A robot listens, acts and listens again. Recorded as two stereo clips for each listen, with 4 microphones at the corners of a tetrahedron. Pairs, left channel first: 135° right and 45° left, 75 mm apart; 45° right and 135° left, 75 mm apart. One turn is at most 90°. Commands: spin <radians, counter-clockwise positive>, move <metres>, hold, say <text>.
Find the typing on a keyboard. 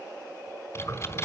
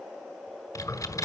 spin -1.48
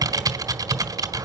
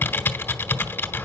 spin 0.26
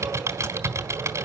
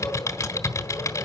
say Found it: typing on a keyboard, straight ahead, 1 to 2 m away.